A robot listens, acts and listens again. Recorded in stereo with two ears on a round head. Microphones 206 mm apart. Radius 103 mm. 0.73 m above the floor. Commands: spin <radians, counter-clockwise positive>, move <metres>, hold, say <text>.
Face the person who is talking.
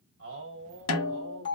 spin -0.96
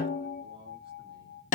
hold
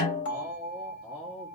say Found it: a man speaking, straight ahead.